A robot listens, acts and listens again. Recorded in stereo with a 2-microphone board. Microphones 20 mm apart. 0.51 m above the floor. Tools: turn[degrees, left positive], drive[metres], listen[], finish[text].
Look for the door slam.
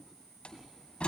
Thought: The door slam: about 65° left or 115° left.
Action: turn[65]
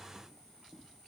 Action: listen[]
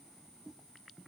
Action: finish[I heard a door slam, but can't make it out now. It was about straight ahead or 50° left.]